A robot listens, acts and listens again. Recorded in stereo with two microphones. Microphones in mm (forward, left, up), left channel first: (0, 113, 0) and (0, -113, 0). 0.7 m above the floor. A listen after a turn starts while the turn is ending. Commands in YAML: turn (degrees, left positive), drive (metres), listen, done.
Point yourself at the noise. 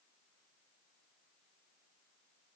listen: true
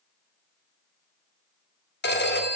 turn: 50
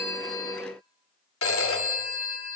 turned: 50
turn: 80
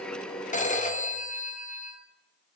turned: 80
turn: 35
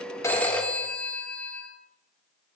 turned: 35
done: "Found it: a phone ringing, straight ahead, under 1 m away."